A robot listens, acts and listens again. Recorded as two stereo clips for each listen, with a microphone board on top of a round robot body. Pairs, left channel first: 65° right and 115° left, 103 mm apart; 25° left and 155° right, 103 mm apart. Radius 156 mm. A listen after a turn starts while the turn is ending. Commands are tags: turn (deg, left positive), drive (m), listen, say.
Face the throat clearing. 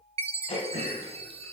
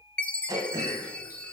<turn deg="-100"/>
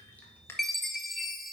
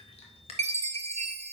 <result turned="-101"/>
<say>Found it: throat clearing, straight ahead, under 1 m away.</say>